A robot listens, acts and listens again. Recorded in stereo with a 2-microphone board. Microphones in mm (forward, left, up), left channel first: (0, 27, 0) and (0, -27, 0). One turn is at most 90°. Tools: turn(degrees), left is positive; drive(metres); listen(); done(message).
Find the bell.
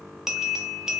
turn(degrees=-30)
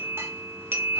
turn(degrees=-90)
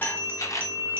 turn(degrees=-45)
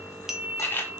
done("Facing the bell, 1 to 2 m away.")